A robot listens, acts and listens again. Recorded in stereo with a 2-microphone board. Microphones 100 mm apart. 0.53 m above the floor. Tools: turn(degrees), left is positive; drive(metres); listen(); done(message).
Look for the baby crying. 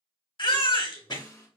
turn(degrees=60)
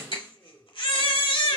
turn(degrees=55)
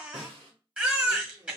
turn(degrees=-10)
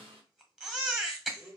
done("Facing the baby crying.")